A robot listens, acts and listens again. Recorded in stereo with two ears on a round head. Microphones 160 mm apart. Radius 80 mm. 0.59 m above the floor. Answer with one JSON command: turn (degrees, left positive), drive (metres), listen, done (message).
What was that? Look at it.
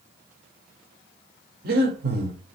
{"turn": -50}
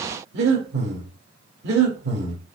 {"turn": -70}
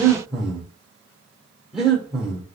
{"done": "Found it: breathing, straight ahead."}